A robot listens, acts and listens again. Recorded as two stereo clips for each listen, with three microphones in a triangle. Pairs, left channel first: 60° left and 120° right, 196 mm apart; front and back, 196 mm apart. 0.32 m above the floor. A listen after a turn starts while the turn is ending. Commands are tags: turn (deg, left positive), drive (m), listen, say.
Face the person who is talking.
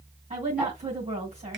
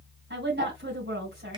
<turn deg="-170"/>
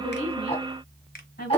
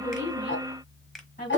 <turn deg="35"/>
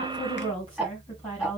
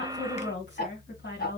<say>Facing the woman speaking.</say>